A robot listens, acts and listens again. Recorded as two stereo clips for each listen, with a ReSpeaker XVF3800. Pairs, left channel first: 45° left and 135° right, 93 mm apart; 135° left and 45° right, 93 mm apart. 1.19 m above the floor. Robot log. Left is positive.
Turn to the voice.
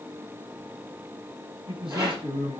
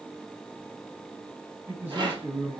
note: The man speaking: 115° right.
cmd yaw -115
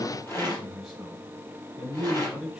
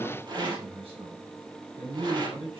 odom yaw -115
note: The man speaking is now 50° right.
cmd yaw -50
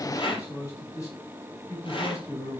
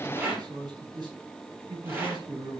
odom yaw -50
note: The man speaking is now 10° right.
cmd yaw -10
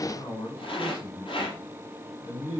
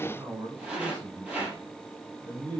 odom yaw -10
end: Facing the man speaking, over 4 m away.